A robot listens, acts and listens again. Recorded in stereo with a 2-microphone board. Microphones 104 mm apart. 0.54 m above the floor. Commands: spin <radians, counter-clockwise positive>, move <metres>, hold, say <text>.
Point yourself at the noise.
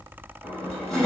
spin 0.52
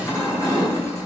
spin 2.62
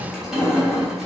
say Facing the crushing, 2 to 4 m away.